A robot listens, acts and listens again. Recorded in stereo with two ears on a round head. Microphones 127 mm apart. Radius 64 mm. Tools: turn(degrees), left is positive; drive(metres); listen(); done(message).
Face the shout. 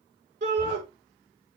turn(degrees=-60)
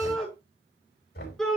done("Found it: a shout, straight ahead.")